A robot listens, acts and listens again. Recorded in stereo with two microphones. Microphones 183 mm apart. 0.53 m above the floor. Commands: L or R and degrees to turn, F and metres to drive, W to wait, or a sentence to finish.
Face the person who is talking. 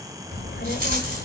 L75
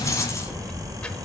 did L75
Facing the child speaking, 1 to 2 m away.